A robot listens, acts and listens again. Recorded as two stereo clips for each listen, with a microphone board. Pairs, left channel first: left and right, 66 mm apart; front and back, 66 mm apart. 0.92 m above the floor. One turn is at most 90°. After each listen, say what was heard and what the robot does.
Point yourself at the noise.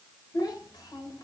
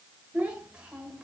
The child speaking: 105° left. Turn 90° left.
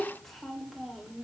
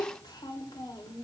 Found it: a child speaking, straight ahead.